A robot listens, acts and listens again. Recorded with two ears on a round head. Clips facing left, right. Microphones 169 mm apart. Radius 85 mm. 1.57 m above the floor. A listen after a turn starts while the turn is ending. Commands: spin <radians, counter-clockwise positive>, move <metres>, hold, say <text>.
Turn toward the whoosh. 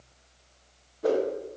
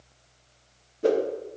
spin -0.61
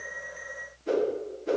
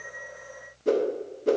spin -1.92
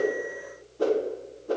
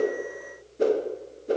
spin -0.44
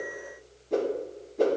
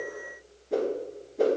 say Facing the whoosh, 2 to 4 m away.